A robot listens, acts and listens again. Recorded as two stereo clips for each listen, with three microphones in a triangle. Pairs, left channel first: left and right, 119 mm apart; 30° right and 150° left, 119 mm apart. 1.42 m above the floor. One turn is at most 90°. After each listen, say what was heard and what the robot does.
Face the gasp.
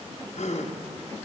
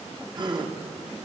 The gasp: 100° left. Turn 90° left.
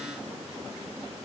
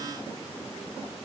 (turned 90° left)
Nothing new. It was at 10° left. Turn 10° left.
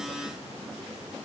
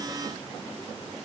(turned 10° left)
I heard a gasp from this way, but can't make it out now.